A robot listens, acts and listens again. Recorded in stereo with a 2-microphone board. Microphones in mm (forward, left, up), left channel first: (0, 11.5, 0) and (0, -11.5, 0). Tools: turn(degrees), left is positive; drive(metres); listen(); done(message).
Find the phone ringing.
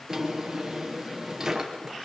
listen()
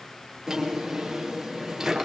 listen()
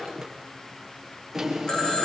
turn(degrees=30)
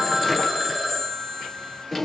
done("Facing the phone ringing, over 4 m away.")